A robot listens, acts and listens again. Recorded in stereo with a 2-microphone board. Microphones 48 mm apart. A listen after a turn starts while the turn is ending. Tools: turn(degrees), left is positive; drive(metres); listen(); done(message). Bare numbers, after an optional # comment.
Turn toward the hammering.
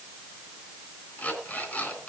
listen()
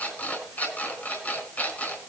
listen()
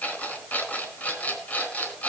done("I can't make out hammering, only an alarm clock.")